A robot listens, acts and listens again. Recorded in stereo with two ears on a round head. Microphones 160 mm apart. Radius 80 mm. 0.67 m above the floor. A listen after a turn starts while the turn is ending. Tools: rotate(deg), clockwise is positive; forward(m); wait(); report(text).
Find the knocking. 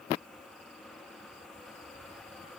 wait()
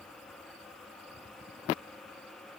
wait()
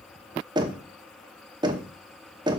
rotate(25)
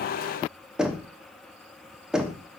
report("Found it: knocking, straight ahead.")